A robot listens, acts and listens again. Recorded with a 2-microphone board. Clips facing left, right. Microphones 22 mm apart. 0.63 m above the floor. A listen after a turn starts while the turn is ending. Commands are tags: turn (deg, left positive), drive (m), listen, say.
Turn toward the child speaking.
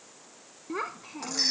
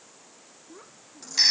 <turn deg="90"/>
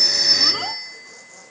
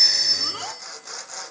<listen/>
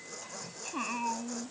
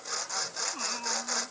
<turn deg="20"/>
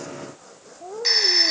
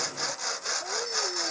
<say>Facing the child speaking.</say>